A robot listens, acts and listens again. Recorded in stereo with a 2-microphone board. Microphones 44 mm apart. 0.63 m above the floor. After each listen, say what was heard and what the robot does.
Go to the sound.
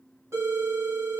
The phone ringing: about 75° right or 105° right. Turn 75° right.
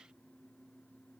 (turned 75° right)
Keep listening.
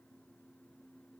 Keep listening.
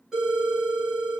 So it is at 10° right. Turn 10° right.
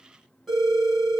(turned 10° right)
Drive 1.0 m forward.
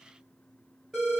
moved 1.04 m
Drive 1.0 m forward.
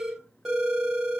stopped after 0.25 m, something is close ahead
Arrived at the phone ringing, straight ahead.